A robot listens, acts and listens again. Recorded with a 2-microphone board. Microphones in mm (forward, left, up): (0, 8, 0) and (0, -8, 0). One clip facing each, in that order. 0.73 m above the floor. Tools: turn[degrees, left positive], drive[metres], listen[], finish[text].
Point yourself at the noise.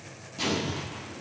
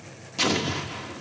Thought: The explosion: about 45° right or 135° right.
Action: turn[-45]
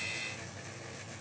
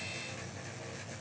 Action: listen[]
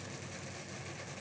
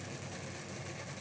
Action: finish[I heard an explosion, but can't make it out now. It was about straight ahead or 90° right.]